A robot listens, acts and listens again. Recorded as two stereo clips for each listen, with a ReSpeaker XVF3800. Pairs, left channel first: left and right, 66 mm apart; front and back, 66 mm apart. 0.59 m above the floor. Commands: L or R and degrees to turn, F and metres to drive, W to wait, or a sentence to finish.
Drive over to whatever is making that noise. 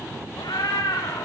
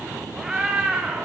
L100
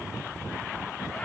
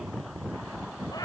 W
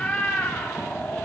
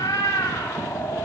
L15
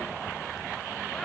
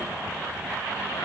W
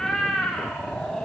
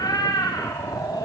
F1.0
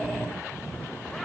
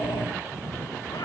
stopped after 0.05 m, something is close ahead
Blocked. The cat meowing is further on, straight ahead.